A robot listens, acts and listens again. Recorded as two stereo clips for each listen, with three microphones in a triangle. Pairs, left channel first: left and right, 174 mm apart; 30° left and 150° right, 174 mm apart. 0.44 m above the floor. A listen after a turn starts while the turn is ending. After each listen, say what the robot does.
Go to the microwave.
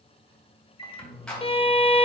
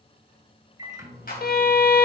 Turn 145° left.
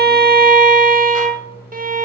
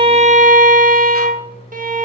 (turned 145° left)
Turn 15° right.
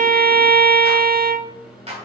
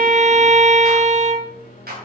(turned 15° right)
Drive 1.0 m forward.
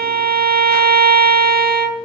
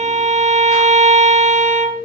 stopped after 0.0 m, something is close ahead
Keep listening.
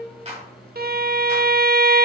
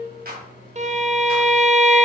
Blocked. The microwave is further on, straight ahead.